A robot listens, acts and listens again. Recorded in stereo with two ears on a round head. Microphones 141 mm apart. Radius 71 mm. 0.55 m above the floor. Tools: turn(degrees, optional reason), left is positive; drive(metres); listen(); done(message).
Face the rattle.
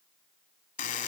listen()
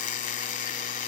listen()
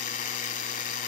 done("I can't make out a rattle, only a buzzer.")